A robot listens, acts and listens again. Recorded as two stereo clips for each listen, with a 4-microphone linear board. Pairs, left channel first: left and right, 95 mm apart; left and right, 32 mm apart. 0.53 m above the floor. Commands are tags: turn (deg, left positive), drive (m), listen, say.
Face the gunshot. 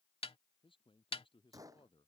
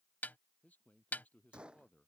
<turn deg="-35"/>
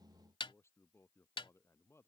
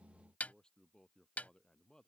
<listen/>
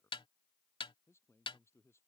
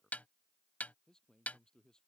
<say>I heard a gunshot, but can't make it out now. It was about straight ahead or 110° right.</say>